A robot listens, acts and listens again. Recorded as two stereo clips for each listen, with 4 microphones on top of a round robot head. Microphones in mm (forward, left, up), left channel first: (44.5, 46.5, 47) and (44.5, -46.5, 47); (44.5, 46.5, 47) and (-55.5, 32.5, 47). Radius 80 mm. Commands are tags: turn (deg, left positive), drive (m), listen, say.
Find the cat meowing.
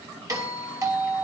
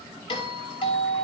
<listen/>
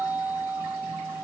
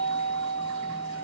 <listen/>
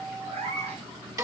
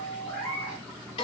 <turn deg="-80"/>
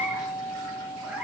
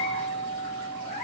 <listen/>
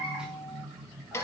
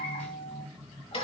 <listen/>
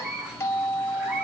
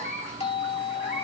<turn deg="-10"/>
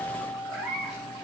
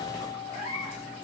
<say>Facing the cat meowing.</say>